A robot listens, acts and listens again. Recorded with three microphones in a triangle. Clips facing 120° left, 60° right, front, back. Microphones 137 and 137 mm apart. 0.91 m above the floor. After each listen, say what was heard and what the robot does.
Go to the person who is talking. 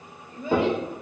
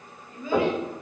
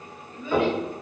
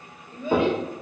The child speaking: 175° right. Turn 175° right.
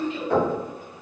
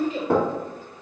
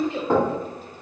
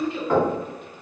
The child speaking is now 10° right. Turn 10° right.
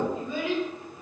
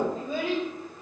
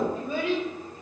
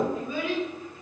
Drive 1.0 m forward.
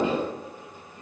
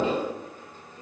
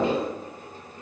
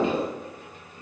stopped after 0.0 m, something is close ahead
Keep listening.
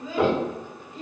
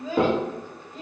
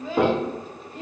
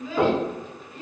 Blocked. The child speaking is further on, straight ahead.